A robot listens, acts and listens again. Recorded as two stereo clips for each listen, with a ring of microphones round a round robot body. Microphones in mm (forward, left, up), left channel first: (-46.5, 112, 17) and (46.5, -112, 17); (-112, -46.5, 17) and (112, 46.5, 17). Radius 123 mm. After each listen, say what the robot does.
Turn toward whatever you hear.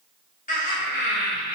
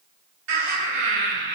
Turn 65° left.
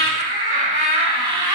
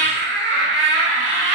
Found it: laughter, straight ahead, 1 to 2 m away.